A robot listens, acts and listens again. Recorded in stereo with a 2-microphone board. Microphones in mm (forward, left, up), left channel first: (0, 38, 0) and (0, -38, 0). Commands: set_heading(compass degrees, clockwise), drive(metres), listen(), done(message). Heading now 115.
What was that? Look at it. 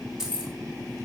set_heading(145)
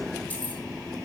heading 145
listen()
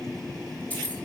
set_heading(125)
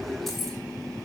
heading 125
listen()
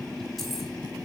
listen()
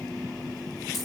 done("I heard keys jangling from this way, but can't make it out now.")